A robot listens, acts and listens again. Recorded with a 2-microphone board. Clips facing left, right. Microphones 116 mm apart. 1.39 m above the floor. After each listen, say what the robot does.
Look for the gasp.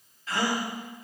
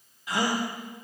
Turn 30° right.
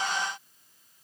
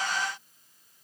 Keep listening.
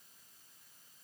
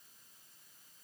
I heard a gasp, but can't make it out now. It was about 15° left or 135° right.